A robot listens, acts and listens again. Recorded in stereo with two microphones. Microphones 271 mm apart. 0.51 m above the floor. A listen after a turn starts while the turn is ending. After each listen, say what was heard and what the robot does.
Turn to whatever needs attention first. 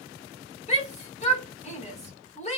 The shout: about 25° left or 155° left. Turn 25° left.
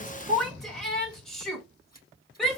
Facing the shout, 1 to 2 m away.